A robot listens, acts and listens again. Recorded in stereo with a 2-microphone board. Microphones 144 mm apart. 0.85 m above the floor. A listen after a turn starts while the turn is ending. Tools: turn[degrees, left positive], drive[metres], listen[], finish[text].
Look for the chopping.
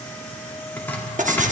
Action: turn[30]
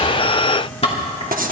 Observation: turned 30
Thought: So it is at 135° left.
Action: turn[135]
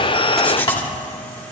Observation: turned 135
Thought: The chopping is now 35° left.
Action: turn[35]
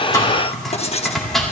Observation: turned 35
Action: finish[Found it: chopping, straight ahead.]